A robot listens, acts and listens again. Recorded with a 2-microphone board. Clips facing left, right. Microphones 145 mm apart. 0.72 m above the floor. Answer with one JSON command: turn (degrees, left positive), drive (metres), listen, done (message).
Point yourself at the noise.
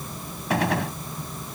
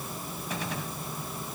{"turn": 90}
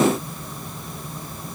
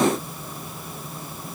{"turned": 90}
{"done": "Facing where the gunshot came from. I can't hear it now."}